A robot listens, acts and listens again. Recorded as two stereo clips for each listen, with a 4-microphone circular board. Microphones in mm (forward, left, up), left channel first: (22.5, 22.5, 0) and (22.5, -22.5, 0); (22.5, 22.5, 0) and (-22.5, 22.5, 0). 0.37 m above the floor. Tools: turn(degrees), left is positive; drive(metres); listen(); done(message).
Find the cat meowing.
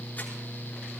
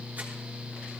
listen()
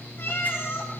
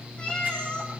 turn(degrees=65)
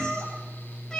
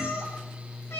turn(degrees=15)
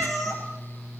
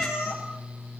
done("Found it: a cat meowing, straight ahead, over 4 m away.")